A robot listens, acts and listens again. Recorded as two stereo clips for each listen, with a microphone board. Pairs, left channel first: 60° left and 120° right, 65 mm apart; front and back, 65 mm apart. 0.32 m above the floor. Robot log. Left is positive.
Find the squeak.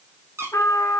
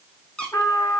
note: The squeak: 75° right.
cmd yaw -75
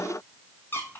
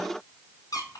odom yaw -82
end: Found it: a squeak, straight ahead.